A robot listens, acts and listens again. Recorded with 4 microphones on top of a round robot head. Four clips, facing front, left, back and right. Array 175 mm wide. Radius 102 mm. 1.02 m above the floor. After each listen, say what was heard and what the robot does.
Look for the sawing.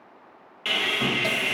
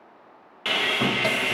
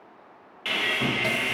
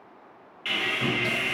The sawing: 85° left. Turn 85° left.
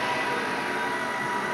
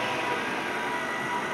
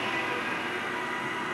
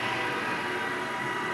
The sawing is now 40° left. Turn 40° left.
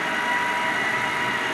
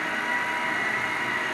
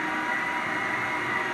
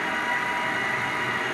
Facing the sawing, under 1 m away.